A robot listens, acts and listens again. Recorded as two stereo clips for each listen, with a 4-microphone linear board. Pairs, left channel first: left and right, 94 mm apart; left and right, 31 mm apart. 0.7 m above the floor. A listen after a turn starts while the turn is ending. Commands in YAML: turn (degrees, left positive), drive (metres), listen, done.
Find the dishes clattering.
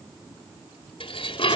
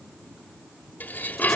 turn: 70
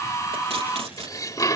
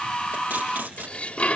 turn: 40
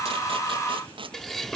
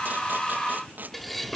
done: "Facing the dishes clattering."